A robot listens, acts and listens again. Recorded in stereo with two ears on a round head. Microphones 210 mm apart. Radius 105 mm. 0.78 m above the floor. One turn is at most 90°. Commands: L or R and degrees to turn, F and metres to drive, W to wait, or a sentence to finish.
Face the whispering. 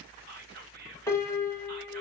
R40
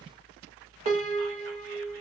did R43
W
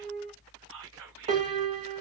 R85
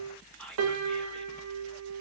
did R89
Facing the whispering.